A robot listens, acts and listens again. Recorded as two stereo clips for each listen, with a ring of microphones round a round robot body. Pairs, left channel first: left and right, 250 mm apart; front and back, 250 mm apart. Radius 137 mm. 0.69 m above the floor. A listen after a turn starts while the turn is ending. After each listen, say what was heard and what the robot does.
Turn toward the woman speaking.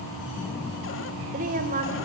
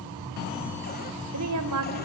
The woman speaking: 155° right. Turn 155° right.
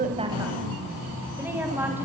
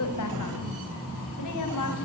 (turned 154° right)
The woman speaking is now 10° right. Turn 10° right.
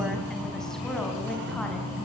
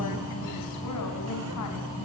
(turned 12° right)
Keep listening.
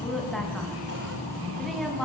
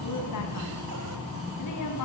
Facing the woman speaking.